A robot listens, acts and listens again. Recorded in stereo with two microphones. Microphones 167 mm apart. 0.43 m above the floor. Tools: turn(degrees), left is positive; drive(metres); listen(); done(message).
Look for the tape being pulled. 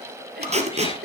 turn(degrees=-40)
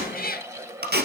turn(degrees=-100)
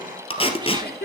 turn(degrees=35)
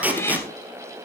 turn(degrees=-10)
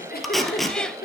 done("Found it: tape being pulled, straight ahead.")